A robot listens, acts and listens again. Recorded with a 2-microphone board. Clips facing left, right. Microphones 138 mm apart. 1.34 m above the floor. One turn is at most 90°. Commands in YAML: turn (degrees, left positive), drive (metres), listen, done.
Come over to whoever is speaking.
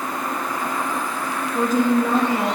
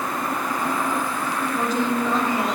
turn: 50
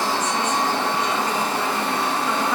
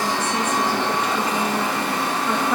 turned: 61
listen: true
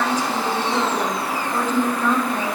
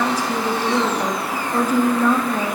turn: -10
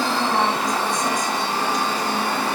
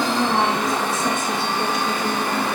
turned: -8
drive: 1.0
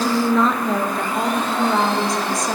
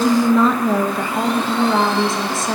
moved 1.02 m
drive: 1.0
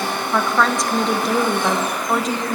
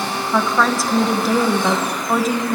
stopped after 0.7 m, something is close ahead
done: "Arrived at the woman speaking, straight ahead."